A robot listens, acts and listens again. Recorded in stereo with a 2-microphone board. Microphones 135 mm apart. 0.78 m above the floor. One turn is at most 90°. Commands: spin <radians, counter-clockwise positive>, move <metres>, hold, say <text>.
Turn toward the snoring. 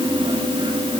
hold
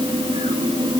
hold
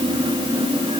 say I can't make out snoring.